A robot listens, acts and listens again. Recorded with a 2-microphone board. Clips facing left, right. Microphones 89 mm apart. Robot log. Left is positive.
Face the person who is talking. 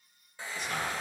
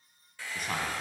note: The man speaking: about 50° right or 130° right.
cmd yaw -50
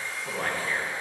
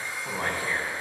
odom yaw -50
note: So it is at 15° right.
cmd yaw -15
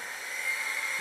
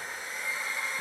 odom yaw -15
cmd idle
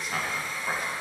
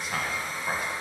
end: Facing the man speaking.